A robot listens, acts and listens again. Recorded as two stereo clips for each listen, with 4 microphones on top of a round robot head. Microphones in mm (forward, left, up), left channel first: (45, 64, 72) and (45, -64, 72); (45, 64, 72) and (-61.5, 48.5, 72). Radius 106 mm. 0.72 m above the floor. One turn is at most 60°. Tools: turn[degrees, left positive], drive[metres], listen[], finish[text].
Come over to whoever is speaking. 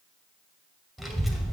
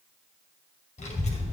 Action: drive[1.0]
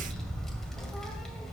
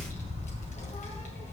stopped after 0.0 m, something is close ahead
Action: finish[Something is in my way. I am facing the child speaking but have not reached it.]